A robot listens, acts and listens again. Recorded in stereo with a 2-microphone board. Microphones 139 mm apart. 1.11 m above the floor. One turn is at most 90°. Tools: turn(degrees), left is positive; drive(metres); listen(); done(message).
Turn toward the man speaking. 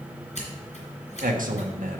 turn(degrees=-90)
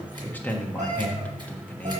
turn(degrees=10)
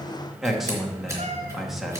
done("Facing the man speaking.")